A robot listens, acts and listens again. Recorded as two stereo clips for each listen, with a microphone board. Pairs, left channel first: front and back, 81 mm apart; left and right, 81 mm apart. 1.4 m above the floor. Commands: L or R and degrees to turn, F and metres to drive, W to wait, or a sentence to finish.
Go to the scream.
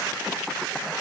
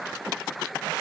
W
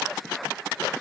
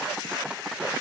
W
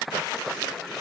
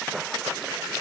I can't make out a scream.